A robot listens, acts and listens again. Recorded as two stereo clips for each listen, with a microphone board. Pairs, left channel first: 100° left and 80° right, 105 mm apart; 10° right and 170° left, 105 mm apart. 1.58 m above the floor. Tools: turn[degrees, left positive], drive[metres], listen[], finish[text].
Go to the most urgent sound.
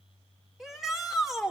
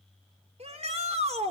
Thought: The shout: 170° right.
Action: turn[-170]
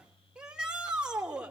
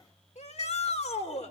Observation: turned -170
Action: drive[1.0]
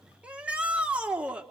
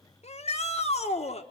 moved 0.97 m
Action: drive[1.0]
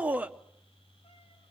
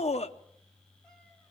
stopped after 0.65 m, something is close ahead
Action: finish[Arrived at the shout, straight ahead.]